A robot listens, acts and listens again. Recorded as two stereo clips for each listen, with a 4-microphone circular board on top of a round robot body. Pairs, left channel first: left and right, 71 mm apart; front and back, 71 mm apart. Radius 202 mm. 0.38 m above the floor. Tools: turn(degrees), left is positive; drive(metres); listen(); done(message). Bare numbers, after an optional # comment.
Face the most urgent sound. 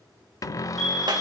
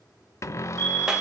# The fire alarm: 170° left.
turn(170)
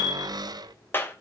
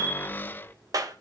# The fire alarm is now 60° left.
turn(60)
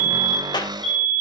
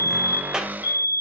# The fire alarm is now 10° left.
turn(10)
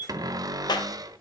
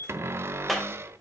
done("Found it: a fire alarm, straight ahead, over 4 m away.")